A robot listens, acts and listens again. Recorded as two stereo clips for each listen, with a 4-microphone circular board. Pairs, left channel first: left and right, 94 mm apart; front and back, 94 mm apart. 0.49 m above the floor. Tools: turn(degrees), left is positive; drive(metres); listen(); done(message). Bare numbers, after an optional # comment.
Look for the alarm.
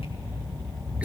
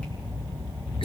listen()
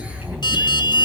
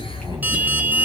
# The alarm: 115° left.
turn(115)
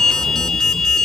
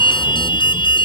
done("Facing the alarm, 1 to 2 m away.")